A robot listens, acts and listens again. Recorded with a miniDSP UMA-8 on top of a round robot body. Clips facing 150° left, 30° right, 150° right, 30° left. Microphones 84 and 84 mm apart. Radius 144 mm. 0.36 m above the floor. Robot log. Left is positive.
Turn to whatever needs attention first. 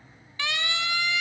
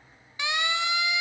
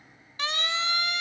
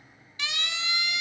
note: The siren: 100° right.
cmd yaw -100
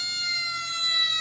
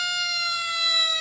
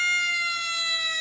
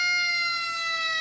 note: The siren is now 50° right.
cmd yaw -50
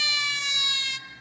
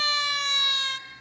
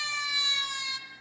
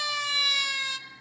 note: The siren is now 10° left.
cmd yaw +10
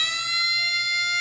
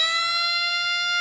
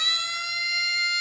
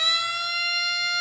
end: Facing the siren, 2 to 4 m away.